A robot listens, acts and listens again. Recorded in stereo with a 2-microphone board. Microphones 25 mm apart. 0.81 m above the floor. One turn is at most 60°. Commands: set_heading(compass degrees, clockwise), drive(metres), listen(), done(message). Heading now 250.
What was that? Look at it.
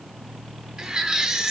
set_heading(280)
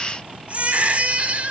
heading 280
set_heading(340)
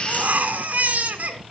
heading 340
set_heading(40)
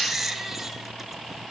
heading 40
done("Found it: a baby crying, straight ahead, 2 to 4 m away.")